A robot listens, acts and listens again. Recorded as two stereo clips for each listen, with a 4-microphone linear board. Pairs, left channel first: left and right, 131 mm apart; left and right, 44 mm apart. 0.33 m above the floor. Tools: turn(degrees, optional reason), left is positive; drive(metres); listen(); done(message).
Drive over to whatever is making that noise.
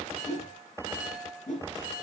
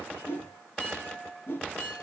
turn(degrees=70, reason="The whoosh: about 70° left or 110° left.")
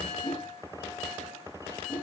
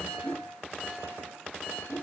turn(degrees=40, reason="So it is at 40° left.")
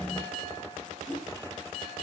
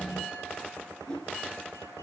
turn(degrees=10, reason="The whoosh is now 10° left.")
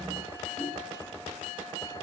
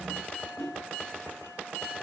drive(metres=1.0)
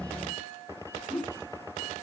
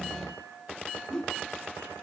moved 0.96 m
drive(metres=1.0)
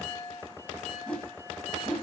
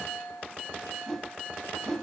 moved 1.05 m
turn(degrees=10, reason="The whoosh is now 10° left.")
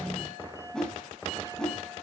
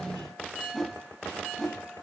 drive(metres=1.0)
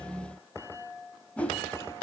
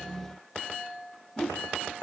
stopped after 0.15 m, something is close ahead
turn(degrees=10, reason="The whoosh is now 10° left.")
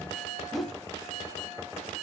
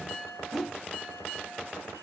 done("Arrived at the whoosh, straight ahead.")